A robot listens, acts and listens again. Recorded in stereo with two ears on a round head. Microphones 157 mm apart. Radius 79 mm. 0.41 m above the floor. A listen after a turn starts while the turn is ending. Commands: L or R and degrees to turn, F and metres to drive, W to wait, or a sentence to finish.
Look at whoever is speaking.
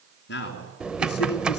L65
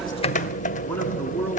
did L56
L10
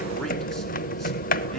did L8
W
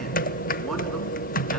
W
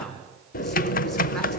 Found it: a man speaking, straight ahead, over 4 m away.